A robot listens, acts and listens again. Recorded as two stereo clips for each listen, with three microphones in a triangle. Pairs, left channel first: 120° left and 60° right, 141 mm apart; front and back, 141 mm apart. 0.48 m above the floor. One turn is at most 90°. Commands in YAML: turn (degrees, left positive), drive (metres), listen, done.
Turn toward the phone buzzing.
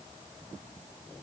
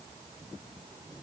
listen: true
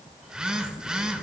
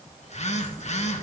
turn: 25
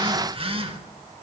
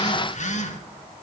turn: -20
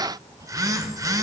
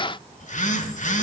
done: "Facing the phone buzzing, 1 to 2 m away."